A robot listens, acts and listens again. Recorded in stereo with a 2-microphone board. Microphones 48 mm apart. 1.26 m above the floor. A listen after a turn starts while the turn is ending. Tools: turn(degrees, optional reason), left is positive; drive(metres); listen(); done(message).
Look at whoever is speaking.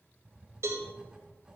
listen()
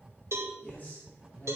turn(degrees=40, reason="The man speaking: about 40° left or 140° left.")
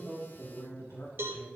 turn(degrees=100, reason="So it is at 100° left.")
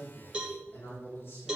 turn(degrees=60, reason="The man speaking is now 60° left.")
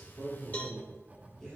turn(degrees=15, reason="The man speaking is now 15° left.")
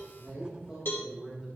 done("Found it: a man speaking, straight ahead, over 4 m away.")